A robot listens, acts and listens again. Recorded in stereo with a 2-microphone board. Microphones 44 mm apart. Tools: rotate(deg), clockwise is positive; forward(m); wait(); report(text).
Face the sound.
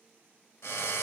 rotate(-90)
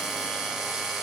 rotate(10)
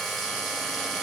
report("Facing the drill, 1 to 2 m away.")